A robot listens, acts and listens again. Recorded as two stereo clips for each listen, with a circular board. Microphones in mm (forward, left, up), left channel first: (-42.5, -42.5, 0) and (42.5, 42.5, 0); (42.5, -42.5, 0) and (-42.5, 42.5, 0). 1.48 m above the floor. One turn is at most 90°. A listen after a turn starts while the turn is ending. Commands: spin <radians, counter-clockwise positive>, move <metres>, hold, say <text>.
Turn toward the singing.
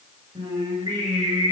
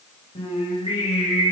spin -0.26
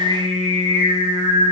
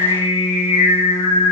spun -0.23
say Facing the singing, over 4 m away.